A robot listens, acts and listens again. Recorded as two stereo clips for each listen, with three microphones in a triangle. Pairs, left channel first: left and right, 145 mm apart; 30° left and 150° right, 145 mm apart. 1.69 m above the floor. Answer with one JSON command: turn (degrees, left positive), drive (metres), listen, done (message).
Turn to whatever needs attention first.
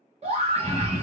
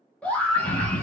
{"turn": -50}
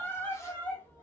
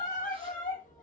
{"turn": 15}
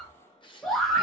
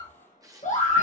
{"done": "Found it: a scream, straight ahead, 1 to 2 m away."}